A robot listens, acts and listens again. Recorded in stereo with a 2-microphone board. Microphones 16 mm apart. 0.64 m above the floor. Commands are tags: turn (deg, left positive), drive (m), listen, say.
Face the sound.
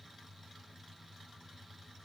<listen/>
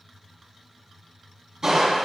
<turn deg="-25"/>
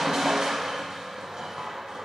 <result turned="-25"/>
<turn deg="-125"/>
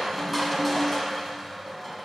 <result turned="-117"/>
<turn deg="-10"/>
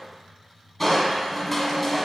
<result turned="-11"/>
<say>Found it: crushing, straight ahead.</say>